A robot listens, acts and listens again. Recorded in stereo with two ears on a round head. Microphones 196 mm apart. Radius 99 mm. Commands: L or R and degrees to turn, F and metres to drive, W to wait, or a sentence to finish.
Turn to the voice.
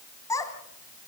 L15
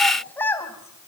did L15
L30
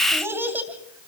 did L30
R10
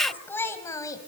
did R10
L15
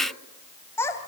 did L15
L15
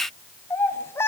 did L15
L10
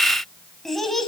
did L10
Found it: a child speaking, straight ahead, 2 to 4 m away.